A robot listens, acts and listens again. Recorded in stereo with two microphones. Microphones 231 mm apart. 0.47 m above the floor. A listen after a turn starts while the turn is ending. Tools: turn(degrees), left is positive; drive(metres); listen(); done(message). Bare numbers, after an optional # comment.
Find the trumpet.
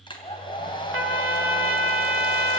# The trumpet: about 70° right or 110° right.
turn(-70)
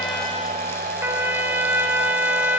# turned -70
# So it is at 10° right.
turn(-10)
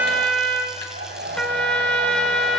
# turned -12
done("Found it: a trumpet, straight ahead, 1 to 2 m away.")